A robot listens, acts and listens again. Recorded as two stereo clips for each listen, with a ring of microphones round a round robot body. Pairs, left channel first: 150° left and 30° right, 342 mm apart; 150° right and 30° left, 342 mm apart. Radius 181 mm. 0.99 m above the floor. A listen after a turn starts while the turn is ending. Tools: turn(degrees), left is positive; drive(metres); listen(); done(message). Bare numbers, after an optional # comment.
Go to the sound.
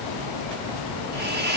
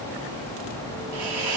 # The hiss: 30° left.
turn(30)
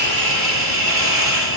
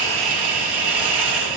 # The hiss is now 10° left.
turn(10)
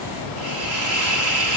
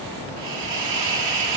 drive(1.0)
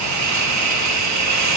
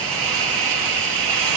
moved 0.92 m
# The hiss is now 10° left.
turn(10)
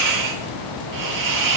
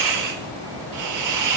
drive(1.0)
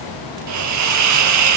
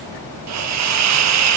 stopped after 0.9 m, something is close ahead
done("Arrived at the hiss, straight ahead.")